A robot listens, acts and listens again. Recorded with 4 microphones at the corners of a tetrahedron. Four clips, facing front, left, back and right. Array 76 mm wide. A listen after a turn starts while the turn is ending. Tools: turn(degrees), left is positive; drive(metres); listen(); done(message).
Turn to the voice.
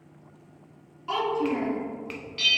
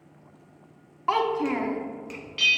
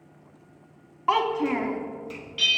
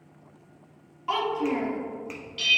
turn(degrees=145)
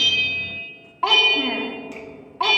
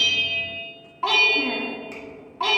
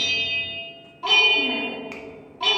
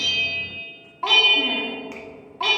done("Found it: a child speaking, straight ahead.")